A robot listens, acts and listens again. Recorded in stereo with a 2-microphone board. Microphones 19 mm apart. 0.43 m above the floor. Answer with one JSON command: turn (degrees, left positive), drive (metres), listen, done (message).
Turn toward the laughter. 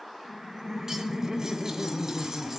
{"turn": -30}
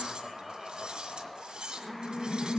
{"done": "Found it: laughter, straight ahead, 1 to 2 m away."}